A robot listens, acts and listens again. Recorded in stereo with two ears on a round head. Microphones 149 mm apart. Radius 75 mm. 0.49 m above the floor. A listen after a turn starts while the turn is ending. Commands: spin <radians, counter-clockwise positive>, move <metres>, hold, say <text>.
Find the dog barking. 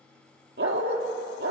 spin -1.57
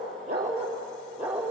spin -0.17
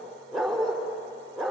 say Facing the dog barking.